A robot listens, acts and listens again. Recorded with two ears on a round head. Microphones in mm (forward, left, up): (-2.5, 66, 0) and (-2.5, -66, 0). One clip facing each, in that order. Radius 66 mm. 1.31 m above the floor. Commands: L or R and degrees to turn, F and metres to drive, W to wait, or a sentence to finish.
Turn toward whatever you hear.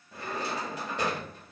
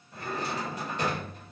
L55
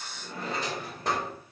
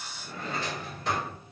L50
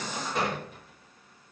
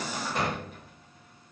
Facing the drawer.